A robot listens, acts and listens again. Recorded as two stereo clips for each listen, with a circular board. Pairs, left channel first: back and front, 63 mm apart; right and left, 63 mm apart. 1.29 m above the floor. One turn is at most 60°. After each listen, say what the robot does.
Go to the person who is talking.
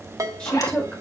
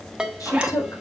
Turn 60° right.
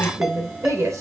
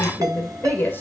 Turn 35° right.
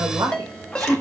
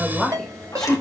Turn 10° right.
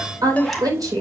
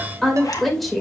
Drive 1.0 m forward.
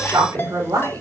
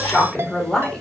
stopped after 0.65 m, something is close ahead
Turn 10° right.
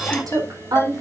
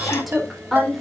Something is in my way. I am facing the woman speaking but have not reached it.